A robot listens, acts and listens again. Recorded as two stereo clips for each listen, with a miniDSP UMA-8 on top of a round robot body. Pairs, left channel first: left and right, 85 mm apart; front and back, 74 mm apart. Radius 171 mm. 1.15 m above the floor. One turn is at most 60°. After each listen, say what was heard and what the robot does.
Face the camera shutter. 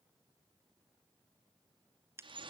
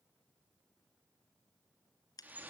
Keep listening.
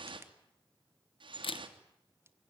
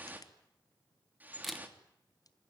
The camera shutter: 90° left. Turn 60° left.
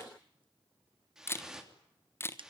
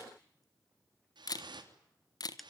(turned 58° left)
The camera shutter is now 30° left. Turn 30° left.
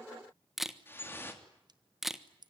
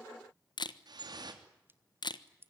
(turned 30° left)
Found it: a camera shutter, straight ahead.